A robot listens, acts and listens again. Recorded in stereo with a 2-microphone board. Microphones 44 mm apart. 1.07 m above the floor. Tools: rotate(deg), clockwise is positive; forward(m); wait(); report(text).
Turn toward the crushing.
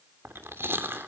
wait()
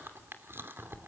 wait()
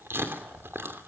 report("I can't make out crushing to turn to.")